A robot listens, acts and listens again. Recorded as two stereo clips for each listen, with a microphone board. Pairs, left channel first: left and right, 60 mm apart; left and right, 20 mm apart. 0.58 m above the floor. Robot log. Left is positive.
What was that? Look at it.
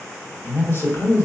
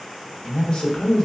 note: The man speaking: about 45° left or 135° left.
cmd yaw +45
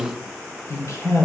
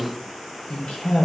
note: So it is at 60° left.
cmd yaw +60
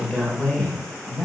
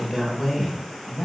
note: The man speaking is now 10° left.
cmd yaw +10
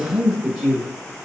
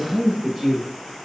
end: Found it: a man speaking, straight ahead, 2 to 4 m away.